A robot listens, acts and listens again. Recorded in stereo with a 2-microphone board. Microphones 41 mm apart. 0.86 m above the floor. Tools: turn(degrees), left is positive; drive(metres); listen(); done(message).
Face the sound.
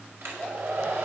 turn(degrees=-70)
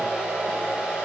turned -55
turn(degrees=-15)
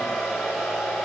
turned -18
done("Found it: a hair dryer, straight ahead, over 4 m away.")